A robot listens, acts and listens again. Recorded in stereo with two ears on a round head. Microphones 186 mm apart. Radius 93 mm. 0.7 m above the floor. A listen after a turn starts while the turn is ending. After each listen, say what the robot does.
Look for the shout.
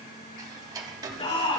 Turn 30° left.
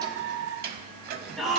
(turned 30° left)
Facing the shout.